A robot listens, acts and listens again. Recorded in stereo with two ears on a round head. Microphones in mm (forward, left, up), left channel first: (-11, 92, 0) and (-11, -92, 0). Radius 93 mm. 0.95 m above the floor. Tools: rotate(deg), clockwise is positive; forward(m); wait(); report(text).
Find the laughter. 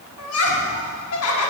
rotate(-90)
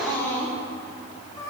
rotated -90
rotate(-20)
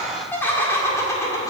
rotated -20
rotate(-15)
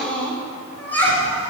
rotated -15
rotate(-10)
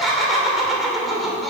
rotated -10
report("Facing the laughter.")